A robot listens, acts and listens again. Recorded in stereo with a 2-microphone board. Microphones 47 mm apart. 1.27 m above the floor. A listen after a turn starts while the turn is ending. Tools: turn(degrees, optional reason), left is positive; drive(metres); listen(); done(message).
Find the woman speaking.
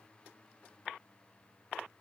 listen()
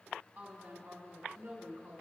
turn(degrees=-55, reason="The woman speaking: about 55° right or 125° right.")
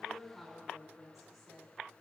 done("Found it: a woman speaking, straight ahead.")